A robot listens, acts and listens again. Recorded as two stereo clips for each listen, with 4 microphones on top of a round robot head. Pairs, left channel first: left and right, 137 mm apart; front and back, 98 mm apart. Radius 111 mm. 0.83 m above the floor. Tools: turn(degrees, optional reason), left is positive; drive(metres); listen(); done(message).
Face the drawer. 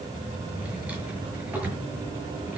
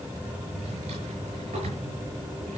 turn(degrees=-170, reason="The drawer: 170° right.")
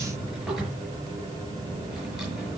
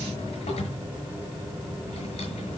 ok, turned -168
done("Facing the drawer.")